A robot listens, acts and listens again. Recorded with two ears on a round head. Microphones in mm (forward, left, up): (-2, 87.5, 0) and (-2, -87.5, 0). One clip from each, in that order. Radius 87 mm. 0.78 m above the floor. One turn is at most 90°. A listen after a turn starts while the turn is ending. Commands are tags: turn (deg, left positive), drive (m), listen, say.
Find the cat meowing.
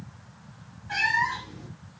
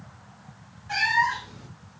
<turn deg="-40"/>
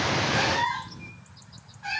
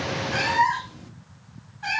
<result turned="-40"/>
<turn deg="-90"/>
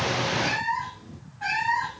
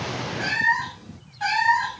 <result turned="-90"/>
<turn deg="-65"/>
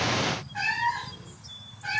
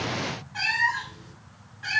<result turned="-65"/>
<turn deg="-45"/>
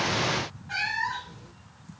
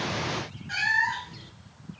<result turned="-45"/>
<turn deg="-20"/>
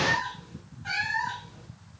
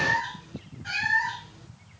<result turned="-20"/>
<say>Found it: a cat meowing, straight ahead, 2 to 4 m away.</say>